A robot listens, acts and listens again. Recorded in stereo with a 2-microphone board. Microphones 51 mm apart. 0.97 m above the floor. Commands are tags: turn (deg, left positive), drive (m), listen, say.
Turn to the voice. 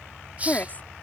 <turn deg="35"/>
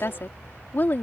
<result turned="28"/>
<turn deg="35"/>
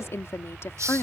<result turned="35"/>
<turn deg="130"/>
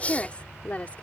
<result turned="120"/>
<turn deg="30"/>
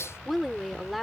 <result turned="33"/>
<say>Found it: a woman speaking, straight ahead.</say>